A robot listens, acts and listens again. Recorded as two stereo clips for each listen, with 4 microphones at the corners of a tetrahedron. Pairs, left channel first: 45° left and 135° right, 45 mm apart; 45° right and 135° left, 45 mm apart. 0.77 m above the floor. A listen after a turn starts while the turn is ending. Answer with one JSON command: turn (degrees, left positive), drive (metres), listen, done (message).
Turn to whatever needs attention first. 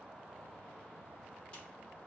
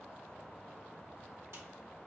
{"listen": true}
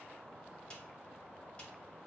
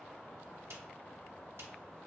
{"listen": true}
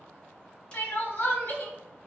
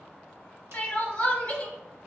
{"done": "Facing the crying, under 1 m away."}